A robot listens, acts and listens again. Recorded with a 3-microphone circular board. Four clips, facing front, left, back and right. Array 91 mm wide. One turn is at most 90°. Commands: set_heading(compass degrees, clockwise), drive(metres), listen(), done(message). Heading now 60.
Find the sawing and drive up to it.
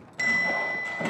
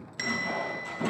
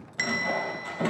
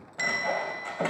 set_heading(150)
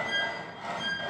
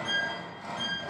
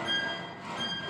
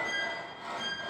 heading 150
set_heading(140)
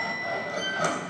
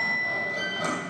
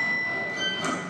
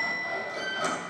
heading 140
drive(1.0)
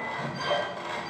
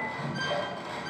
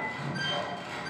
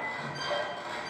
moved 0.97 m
drive(1.0)
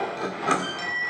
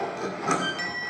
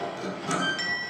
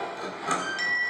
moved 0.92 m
set_heading(125)
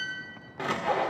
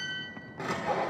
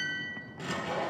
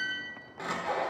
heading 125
drive(1.0)
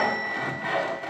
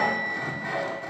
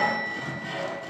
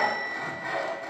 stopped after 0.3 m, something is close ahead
done("Arrived at the sawing, straight ahead.")